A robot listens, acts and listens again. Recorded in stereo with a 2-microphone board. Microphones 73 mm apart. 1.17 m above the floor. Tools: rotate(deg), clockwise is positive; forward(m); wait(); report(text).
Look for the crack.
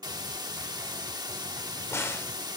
rotate(-40)
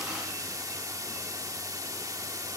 wait()
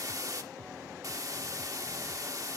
report("I heard a crack, but can't make it out now. It was about straight ahead or 100° left.")